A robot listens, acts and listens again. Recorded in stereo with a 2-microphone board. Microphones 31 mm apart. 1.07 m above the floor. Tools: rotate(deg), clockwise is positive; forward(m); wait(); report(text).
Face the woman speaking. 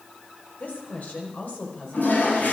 rotate(-55)
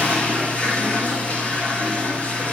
wait()
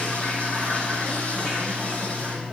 wait()
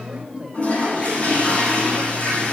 rotate(30)
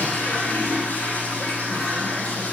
wait()
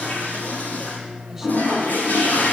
wait()
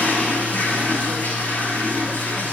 report("I heard a woman speaking from this way, but can't make it out now.")